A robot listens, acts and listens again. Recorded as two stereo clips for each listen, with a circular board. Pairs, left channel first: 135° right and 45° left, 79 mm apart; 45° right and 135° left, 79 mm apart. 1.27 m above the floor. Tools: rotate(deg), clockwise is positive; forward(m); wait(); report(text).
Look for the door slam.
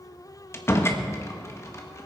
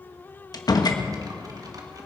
rotate(75)
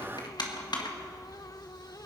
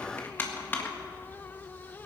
report("Facing where the door slam came from. I can't hear it now.")